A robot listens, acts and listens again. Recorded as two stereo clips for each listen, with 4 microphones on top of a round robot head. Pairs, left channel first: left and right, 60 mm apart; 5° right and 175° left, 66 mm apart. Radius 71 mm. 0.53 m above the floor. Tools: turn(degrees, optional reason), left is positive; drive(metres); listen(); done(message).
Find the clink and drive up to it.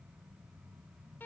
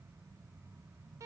listen()
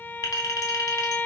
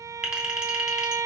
turn(degrees=95, reason="The clink: 95° left.")
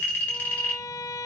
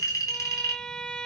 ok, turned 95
turn(degrees=25, reason="The clink is now 25° left.")
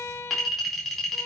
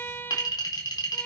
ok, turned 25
drive(metres=1.0)
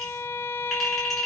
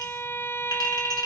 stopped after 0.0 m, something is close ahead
done("Blocked. The clink is further on, straight ahead.")